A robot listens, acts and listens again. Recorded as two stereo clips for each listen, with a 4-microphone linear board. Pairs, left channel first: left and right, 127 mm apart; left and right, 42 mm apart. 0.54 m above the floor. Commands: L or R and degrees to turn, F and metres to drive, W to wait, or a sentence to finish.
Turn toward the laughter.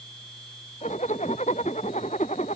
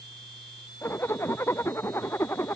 W
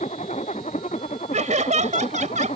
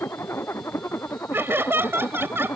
R70
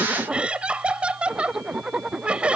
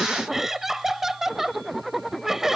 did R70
R10
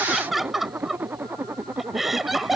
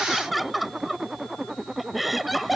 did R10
Found it: laughter, straight ahead.